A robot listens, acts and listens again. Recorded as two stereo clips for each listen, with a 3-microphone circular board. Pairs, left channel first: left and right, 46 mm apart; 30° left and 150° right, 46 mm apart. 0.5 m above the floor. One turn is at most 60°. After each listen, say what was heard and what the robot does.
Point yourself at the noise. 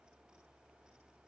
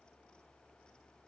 Keep listening.
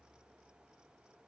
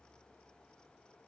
Keep listening.
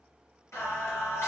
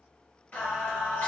The singing: 85° left. Turn 60° left.
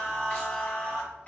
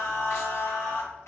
The singing is now 30° left. Turn 30° left.
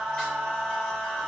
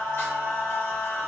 The singing is now 15° left. Turn 15° left.
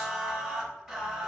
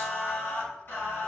Facing the singing, 1 to 2 m away.